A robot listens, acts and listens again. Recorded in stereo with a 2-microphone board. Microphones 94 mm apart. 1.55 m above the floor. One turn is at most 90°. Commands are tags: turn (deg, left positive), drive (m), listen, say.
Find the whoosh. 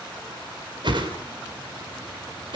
<turn deg="-60"/>
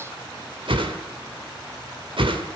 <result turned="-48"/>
<turn deg="-70"/>
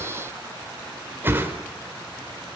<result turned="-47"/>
<turn deg="-25"/>
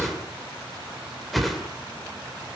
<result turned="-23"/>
<say>Found it: a whoosh, straight ahead.</say>